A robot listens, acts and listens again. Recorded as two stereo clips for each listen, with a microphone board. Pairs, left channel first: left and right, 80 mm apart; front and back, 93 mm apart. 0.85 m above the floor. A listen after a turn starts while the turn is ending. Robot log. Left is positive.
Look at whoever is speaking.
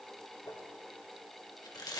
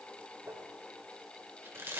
cmd idle
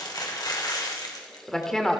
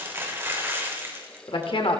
note: The woman speaking: 10° left.
cmd yaw +10
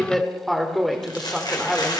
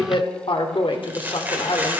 end: Found it: a woman speaking, straight ahead, 2 to 4 m away.